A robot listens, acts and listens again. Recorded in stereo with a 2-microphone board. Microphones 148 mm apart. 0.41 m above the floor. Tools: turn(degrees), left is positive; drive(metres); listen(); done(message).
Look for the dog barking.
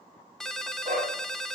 turn(degrees=-65)
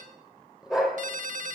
done("Facing the dog barking, over 4 m away.")